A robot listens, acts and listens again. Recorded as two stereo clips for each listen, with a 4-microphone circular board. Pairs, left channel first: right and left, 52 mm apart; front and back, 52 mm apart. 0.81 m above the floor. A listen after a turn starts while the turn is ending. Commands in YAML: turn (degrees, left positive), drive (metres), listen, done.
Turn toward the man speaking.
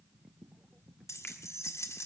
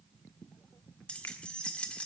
listen: true
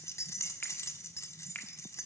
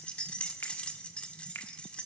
listen: true
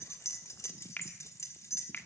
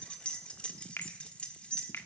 done: "I can't make out a man speaking, only a finger snap and keys jangling."